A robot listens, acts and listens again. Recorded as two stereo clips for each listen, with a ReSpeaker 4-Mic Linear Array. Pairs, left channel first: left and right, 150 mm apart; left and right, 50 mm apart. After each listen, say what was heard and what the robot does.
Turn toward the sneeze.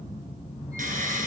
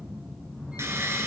Keep listening.
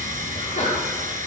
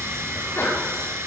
The sneeze: about 60° left or 120° left. Turn 60° left.
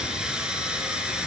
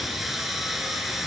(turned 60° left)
Keep listening.
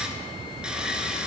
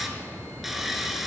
I heard a sneeze, but can't make it out now. It was about straight ahead or 60° left.